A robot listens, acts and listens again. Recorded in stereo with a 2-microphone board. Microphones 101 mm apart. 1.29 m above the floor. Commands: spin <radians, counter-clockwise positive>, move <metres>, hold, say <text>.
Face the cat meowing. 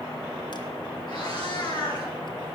spin 0.87
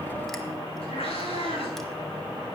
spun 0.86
spin 1.31
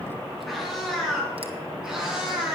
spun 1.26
spin -0.17
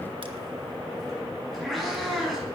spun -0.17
say Found it: a cat meowing, straight ahead, over 4 m away.